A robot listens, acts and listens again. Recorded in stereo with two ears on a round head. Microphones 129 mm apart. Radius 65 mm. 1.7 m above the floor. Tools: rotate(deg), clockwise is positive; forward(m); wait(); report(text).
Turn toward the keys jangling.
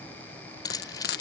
rotate(-30)
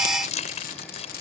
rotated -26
rotate(-130)
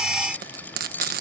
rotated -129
rotate(-15)
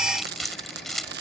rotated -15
report("Facing the keys jangling.")